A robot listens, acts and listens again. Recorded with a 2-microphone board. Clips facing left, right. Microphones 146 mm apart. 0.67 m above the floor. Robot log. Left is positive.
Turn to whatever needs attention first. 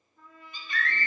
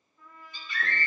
note: The scream: about 60° left or 120° left.
cmd yaw +60
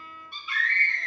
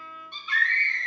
end: Facing the scream, 2 to 4 m away.